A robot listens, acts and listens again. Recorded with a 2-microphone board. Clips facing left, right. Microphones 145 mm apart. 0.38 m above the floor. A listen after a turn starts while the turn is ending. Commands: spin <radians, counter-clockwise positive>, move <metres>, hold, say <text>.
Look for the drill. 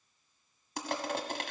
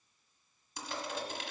hold
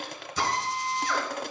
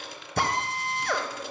spin -0.96
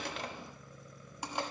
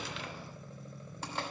hold
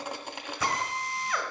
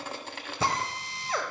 spin -0.61
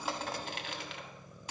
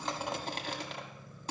hold
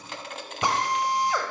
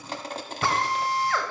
spin 0.35
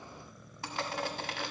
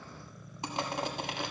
hold
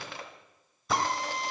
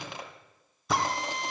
say Found it: a drill, straight ahead.